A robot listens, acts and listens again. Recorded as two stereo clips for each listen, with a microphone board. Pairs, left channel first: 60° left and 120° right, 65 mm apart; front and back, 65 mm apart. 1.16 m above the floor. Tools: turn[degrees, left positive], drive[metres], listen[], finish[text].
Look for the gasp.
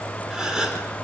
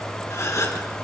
Thought: The gasp: 40° right.
Action: turn[-40]
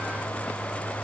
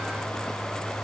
Action: finish[Facing where the gasp came from. I can't hear it now.]